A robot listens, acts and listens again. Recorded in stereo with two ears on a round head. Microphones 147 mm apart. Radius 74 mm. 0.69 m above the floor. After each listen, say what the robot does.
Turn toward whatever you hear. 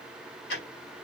Turn 70° left.
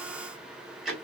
Facing the ticking.